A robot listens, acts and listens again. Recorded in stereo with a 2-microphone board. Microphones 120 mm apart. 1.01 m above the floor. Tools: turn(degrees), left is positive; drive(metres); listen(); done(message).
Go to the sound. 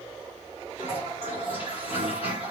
turn(degrees=50)
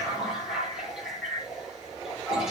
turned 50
drive(metres=1.0)
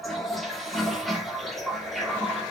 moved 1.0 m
drive(metres=1.0)
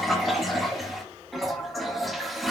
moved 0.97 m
drive(metres=1.0)
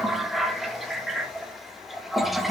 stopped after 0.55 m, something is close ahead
done("Arrived at the toilet flushing, straight ahead.")